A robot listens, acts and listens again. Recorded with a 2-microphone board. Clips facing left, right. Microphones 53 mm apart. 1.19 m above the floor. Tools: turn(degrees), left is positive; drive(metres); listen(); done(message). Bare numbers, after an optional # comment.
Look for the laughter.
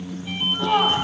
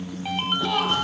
# The laughter: about 25° left or 155° left.
turn(25)
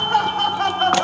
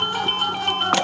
# So it is at 130° left.
turn(130)
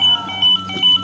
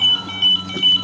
listen()
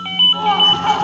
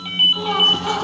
# The laughter is now 45° left.
turn(45)
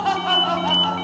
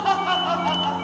done("Facing the laughter.")